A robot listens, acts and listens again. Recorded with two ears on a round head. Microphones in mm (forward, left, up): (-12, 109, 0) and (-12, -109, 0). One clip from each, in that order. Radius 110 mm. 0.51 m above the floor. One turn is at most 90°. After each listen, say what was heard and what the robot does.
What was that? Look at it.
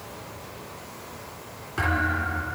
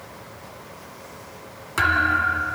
The thud: about 55° right or 125° right. Turn 55° right.
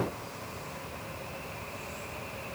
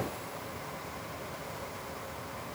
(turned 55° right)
Keep listening.
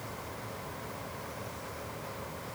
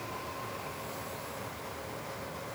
I heard a thud, but can't make it out now. It was about straight ahead or 70° right.